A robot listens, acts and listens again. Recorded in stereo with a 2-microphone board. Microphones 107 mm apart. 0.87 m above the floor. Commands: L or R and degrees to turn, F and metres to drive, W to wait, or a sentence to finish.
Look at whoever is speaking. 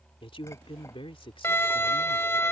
L55
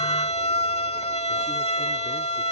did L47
W
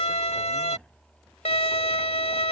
W
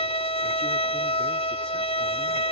I heard a man speaking, but can't make it out now. It was about 10° left or 80° left.